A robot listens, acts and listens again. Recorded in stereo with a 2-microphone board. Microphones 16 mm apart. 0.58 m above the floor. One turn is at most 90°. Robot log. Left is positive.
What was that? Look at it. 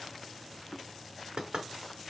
cmd yaw -90
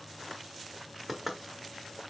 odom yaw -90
end: Found it: knocking, straight ahead.